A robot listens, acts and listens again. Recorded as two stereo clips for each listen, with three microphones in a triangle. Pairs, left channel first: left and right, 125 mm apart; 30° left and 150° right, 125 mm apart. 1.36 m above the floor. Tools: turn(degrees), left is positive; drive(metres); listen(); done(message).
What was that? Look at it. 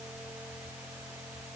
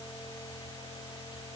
listen()
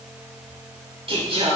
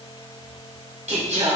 turn(degrees=-130)
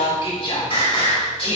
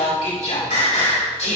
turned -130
turn(degrees=50)
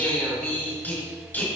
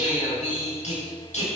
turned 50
turn(degrees=15)
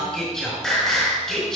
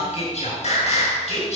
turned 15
done("Facing the singing, over 4 m away.")